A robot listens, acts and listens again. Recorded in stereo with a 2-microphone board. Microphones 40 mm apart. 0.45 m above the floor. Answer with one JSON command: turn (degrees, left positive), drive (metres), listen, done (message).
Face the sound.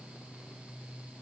{"listen": true}
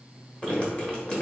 {"turn": 25}
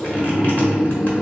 {"turn": 125}
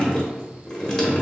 {"turn": 20}
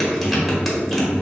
{"done": "Found it: dripping, straight ahead."}